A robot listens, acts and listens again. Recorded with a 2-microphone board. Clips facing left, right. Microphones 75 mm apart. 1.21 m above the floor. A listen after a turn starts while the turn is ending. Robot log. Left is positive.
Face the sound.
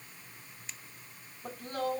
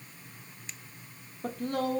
note: The woman speaking: about 75° right or 105° right.
cmd yaw -75
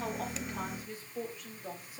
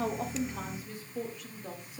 end: Found it: a woman speaking, straight ahead, 2 to 4 m away.